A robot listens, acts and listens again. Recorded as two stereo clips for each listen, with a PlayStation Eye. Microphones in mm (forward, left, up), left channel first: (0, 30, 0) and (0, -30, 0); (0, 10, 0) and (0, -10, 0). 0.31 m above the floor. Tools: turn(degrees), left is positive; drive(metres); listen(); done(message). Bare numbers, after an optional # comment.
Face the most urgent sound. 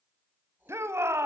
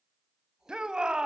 # The shout: about 45° right or 135° right.
turn(-45)
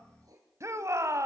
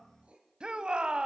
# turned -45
# So it is at 75° right.
turn(-75)
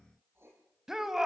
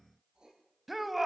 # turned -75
# The shout is now 10° right.
turn(-10)
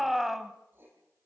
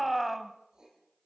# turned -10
done("Facing the shout, 1 to 2 m away.")